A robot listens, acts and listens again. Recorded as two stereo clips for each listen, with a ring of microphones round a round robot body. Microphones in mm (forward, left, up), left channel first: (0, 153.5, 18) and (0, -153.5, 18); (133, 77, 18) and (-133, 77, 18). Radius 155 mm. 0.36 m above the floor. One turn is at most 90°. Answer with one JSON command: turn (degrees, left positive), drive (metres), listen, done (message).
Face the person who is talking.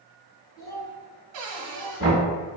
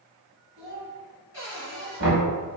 {"turn": 90}
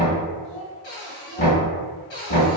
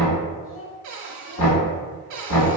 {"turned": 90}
{"turn": 60}
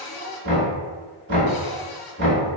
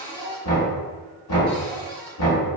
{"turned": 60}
{"done": "Facing the child speaking."}